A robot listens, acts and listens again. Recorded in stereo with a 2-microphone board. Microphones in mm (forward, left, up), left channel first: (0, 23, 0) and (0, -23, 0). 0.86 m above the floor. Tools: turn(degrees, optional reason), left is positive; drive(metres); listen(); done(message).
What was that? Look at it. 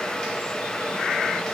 listen()
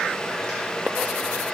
listen()
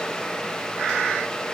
done("I can't make out anything to turn to.")